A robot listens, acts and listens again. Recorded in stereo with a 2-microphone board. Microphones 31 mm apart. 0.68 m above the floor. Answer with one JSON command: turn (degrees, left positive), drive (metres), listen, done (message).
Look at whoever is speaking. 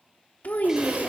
{"turn": 55}
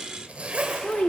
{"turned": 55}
{"turn": 45}
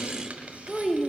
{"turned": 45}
{"done": "Facing the child speaking."}